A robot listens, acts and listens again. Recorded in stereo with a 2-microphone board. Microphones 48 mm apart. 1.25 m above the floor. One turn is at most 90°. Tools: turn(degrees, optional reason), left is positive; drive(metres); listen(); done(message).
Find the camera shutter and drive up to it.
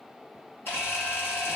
turn(degrees=55, reason="The camera shutter: about 55° left or 125° left.")
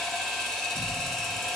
drive(metres=1.0)
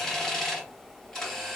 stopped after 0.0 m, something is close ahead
turn(degrees=10, reason="The camera shutter is now 10° left.")
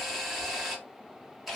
done("Something is in my way. I am facing the camera shutter but have not reached it.")